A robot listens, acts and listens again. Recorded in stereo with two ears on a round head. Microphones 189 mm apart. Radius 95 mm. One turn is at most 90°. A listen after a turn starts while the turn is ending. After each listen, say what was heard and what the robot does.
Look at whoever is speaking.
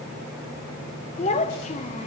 The child speaking: about 35° left or 145° left. Turn 35° left.
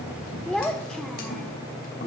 Facing the child speaking.